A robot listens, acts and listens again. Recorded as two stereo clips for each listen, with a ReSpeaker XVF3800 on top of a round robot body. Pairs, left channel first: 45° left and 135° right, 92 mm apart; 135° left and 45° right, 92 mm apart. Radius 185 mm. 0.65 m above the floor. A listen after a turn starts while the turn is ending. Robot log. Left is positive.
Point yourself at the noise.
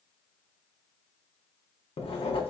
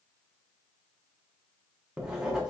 note: The writing: 35° left.
cmd yaw +35
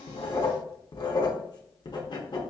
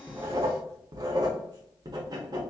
end: Found it: writing, straight ahead, under 1 m away.